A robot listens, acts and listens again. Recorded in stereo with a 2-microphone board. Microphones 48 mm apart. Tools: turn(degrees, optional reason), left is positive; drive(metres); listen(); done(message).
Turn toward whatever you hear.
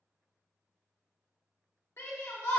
turn(degrees=70, reason="The shout: about 70° left or 110° left.")
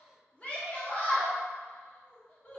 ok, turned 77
turn(degrees=25, reason="So it is at 25° left.")
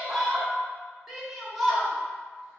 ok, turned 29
done("Found it: a shout, straight ahead, 1 to 2 m away.")